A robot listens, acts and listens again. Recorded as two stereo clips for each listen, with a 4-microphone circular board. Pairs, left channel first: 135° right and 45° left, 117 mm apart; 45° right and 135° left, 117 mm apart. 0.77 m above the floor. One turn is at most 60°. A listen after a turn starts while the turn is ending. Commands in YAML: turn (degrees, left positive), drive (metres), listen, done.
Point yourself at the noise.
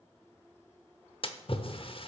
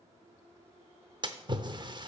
turn: -60
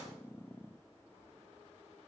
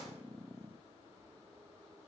turn: -60
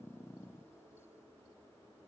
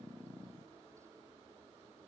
turn: -55
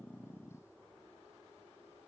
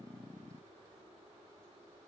done: "Facing where the splash came from. I can't hear it now."